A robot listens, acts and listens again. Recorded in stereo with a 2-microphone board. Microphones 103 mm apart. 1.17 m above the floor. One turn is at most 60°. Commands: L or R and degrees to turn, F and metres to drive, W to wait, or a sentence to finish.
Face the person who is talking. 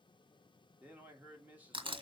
R15
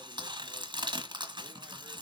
W
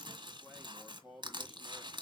Found it: a man speaking, straight ahead, 2 to 4 m away.